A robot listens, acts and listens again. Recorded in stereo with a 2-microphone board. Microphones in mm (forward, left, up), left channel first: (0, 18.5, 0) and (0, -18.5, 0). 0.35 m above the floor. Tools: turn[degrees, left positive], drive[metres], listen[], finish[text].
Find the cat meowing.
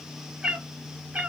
Thought: The cat meowing: about 45° right or 135° right.
Action: turn[-45]
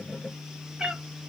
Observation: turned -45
Thought: So it is at 25° right.
Action: turn[-25]
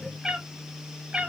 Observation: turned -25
Thought: The cat meowing is now 30° right.
Action: turn[-30]
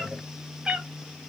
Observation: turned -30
Thought: The cat meowing is now 25° right.
Action: turn[-25]
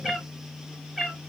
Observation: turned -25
Action: finish[Found it: a cat meowing, straight ahead.]